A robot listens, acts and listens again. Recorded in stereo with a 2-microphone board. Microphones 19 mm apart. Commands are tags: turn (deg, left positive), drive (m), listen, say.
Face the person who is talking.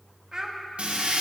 <turn deg="-35"/>
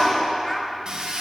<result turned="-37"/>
<listen/>
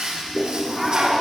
<listen/>
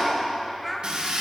<say>Found it: a child speaking, straight ahead.</say>